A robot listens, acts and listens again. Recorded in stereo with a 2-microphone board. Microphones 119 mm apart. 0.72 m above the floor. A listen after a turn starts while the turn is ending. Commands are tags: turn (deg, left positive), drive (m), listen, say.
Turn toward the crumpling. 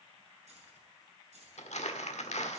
<turn deg="70"/>
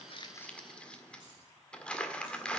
<turn deg="10"/>
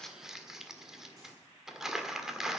<say>Facing the crumpling.</say>